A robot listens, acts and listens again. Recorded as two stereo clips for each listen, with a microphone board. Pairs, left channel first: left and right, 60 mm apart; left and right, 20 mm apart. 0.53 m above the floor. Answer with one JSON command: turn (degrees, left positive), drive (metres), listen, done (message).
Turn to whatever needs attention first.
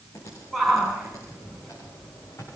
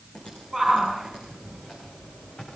{"turn": 30}
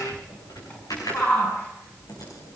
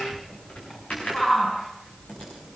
{"turn": 150}
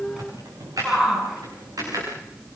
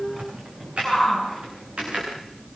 {"turn": -10}
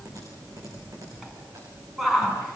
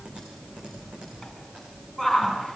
{"done": "Facing the shout."}